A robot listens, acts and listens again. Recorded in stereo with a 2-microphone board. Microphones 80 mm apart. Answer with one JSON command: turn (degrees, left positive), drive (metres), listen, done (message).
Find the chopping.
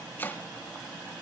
{"turn": 25}
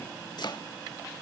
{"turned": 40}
{"turn": 115}
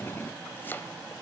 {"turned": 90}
{"turn": 25}
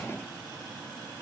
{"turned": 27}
{"listen": true}
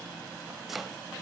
{"done": "Found it: chopping, straight ahead, under 1 m away."}